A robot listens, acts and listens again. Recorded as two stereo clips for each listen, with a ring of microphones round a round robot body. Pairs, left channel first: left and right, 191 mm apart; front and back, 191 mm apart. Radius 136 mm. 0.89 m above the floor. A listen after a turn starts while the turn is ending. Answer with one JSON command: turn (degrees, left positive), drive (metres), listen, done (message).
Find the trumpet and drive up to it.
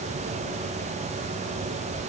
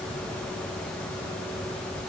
{"listen": true}
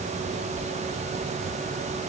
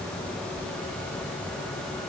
{"listen": true}
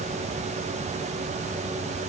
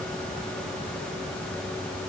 {"done": "I can't make out a trumpet to turn to."}